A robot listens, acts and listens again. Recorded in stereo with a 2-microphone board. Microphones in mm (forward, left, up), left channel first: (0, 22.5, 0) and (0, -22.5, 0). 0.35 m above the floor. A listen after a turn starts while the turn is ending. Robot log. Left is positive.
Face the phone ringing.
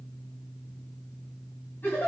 cmd idle
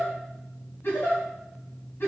cmd idle
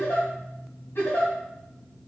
end: I can't make out a phone ringing to turn to.